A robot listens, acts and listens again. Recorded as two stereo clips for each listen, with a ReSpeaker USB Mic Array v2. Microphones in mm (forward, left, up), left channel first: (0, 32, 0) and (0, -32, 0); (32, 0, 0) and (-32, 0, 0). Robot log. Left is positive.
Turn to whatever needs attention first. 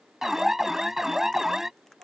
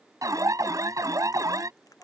note: The alarm: 175° right.
cmd yaw -175
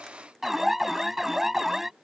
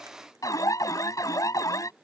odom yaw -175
end: Found it: an alarm, straight ahead.